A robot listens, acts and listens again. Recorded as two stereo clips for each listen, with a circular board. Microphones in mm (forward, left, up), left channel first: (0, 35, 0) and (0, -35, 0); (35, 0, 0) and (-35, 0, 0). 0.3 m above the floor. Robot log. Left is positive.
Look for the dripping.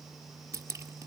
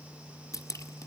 note: The dripping: 40° right.
cmd yaw -40
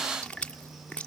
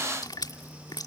note: The dripping is now 15° left.
cmd yaw +15
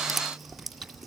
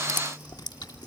end: Facing the dripping.